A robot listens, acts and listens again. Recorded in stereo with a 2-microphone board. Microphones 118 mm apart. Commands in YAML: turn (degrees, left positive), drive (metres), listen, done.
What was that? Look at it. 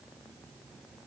listen: true
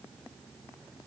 listen: true
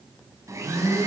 turn: -30
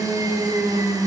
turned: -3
turn: -35
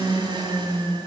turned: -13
turn: -135
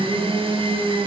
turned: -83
turn: -50
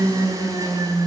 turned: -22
turn: -30
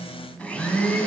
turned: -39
turn: 10
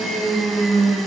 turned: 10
done: "Facing the blender, over 4 m away."